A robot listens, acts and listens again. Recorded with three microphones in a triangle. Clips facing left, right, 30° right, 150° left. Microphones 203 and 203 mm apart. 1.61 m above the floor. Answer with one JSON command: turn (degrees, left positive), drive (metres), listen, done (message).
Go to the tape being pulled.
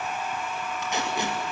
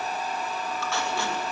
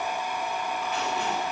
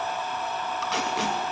{"turn": 160}
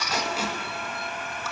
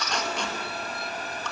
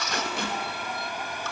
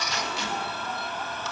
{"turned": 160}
{"drive": 1.0}
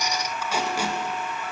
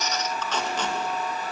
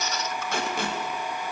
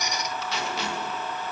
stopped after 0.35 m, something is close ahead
{"turn": 10}
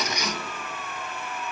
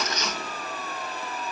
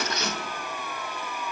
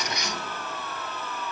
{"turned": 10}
{"listen": true}
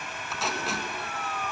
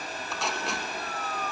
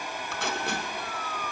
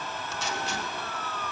{"done": "Blocked. The tape being pulled is further on, straight ahead."}